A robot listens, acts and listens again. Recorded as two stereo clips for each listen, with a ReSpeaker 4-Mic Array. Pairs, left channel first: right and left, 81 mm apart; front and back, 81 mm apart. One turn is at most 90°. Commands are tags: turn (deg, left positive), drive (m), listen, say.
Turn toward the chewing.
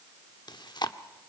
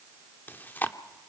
<turn deg="-65"/>
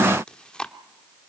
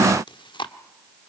<turn deg="-10"/>
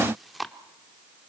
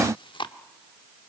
<say>Found it: chewing, straight ahead, 1 to 2 m away.</say>